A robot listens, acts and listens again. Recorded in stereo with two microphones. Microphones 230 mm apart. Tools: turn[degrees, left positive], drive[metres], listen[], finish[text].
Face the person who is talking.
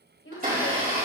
Thought: The woman speaking: about 65° left or 115° left.
Action: turn[65]
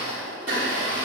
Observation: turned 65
Action: listen[]
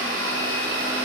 Action: listen[]
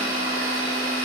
Action: finish[I heard a woman speaking, but can't make it out now. It was about straight ahead or 50° left.]